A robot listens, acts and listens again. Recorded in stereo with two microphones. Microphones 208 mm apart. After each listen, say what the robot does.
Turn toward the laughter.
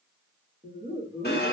Turn 30° right.
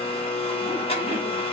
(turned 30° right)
Keep listening.
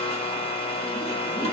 Keep listening.
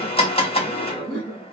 Turn 20° right.
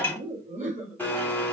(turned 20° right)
Turn 140° right.
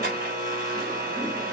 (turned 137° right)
Keep listening.
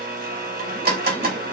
Keep listening.
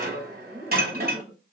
Found it: laughter, straight ahead.